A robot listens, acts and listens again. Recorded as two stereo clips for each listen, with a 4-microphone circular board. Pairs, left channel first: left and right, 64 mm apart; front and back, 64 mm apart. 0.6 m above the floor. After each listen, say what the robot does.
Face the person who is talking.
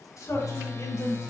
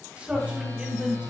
Turn 110° left.
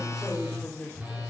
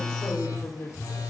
Turn 25° left.
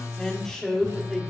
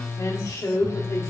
Facing the man speaking.